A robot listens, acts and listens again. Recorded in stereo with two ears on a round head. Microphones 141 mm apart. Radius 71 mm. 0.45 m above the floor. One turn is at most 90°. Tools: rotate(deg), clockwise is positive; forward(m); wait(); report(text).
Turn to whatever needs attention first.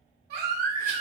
rotate(60)
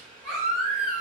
report("Found it: a baby crying, straight ahead.")